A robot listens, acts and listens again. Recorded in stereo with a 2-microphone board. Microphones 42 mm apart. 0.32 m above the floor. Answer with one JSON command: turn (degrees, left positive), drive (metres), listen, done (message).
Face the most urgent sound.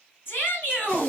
{"turn": 65}
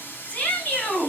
{"turn": 40}
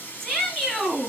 {"turn": 15}
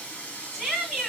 {"done": "Found it: a shout, straight ahead."}